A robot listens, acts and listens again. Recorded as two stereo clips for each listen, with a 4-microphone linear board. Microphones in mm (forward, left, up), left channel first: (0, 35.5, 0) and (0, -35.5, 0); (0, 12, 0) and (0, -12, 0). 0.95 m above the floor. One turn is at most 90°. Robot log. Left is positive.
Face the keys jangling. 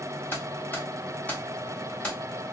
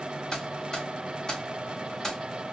cmd yaw +30
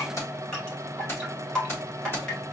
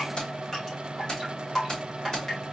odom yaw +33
note: So it is at 150° left.
cmd yaw +90
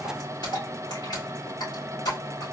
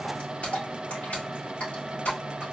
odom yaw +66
note: The keys jangling is now 90° left.
cmd yaw +90
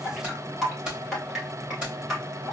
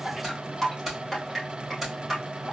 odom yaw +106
note: The keys jangling is now 15° right.
cmd yaw -15
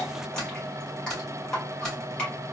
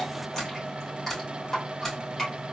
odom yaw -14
end: Found it: keys jangling, straight ahead.